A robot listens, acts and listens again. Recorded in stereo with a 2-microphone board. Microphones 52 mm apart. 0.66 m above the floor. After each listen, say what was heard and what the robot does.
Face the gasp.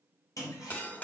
Keep listening.
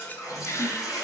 The gasp: about 55° left or 125° left. Turn 55° left.
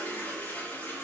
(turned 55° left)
Keep listening.
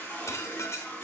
I heard a gasp, but can't make it out now. It was about straight ahead or 70° left.